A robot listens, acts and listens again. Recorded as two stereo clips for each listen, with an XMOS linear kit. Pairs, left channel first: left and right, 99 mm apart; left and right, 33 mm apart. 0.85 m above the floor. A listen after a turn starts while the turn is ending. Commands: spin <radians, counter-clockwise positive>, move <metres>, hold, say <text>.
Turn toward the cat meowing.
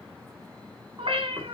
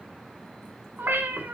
spin -1.22
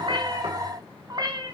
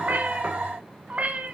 spin -0.87
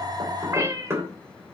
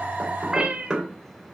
spin -0.52
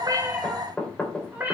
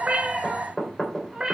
spin -0.35
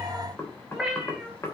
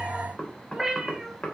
say Facing the cat meowing, 2 to 4 m away.